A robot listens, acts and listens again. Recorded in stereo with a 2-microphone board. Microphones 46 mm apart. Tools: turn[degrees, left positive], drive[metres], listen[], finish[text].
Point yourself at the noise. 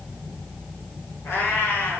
Thought: The cat meowing: about 65° left or 115° left.
Action: turn[65]
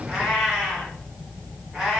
Thought: So it is at 10° right.
Action: turn[-10]
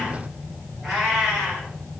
Thought: The cat meowing is now 10° right.
Action: turn[-10]
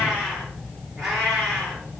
Action: finish[Facing the cat meowing.]